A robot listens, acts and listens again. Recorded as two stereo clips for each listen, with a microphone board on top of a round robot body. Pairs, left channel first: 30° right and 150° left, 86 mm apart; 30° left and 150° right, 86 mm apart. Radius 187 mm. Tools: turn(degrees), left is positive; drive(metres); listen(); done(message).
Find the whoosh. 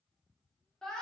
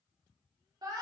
listen()
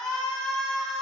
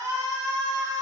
listen()
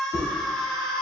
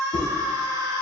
turn(degrees=30)
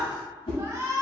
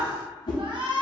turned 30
turn(degrees=-10)
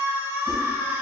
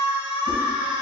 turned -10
done("Facing the whoosh.")